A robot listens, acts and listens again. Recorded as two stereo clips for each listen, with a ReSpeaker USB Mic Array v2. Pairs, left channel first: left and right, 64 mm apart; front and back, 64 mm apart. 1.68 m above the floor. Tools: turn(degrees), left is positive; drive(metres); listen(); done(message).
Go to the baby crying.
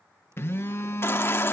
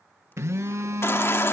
turn(degrees=45)
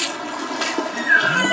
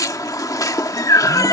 drive(metres=1.0)
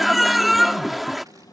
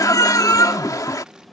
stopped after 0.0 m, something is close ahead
done("Blocked. The baby crying is further on, straight ahead.")